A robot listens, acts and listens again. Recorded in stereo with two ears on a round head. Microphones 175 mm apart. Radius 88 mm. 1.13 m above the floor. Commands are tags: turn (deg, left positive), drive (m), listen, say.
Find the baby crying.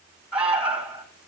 <listen/>
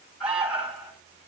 <listen/>
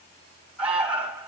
<say>I can't make out a baby crying, only an alarm.</say>